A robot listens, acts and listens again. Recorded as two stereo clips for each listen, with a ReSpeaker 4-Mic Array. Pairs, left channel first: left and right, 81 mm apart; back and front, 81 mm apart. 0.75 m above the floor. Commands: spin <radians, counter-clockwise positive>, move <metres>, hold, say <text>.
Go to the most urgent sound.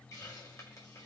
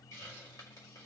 hold
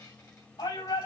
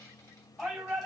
spin 1.57
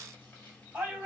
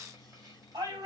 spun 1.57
spin -0.26
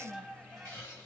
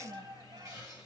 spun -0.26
move 1.0
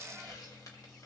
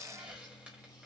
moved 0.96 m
hold
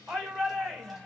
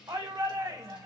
move 1.0
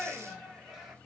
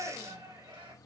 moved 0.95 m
move 1.0
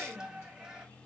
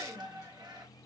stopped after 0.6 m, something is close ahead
spin -0.17
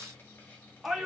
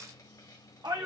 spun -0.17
say I am next to the shout.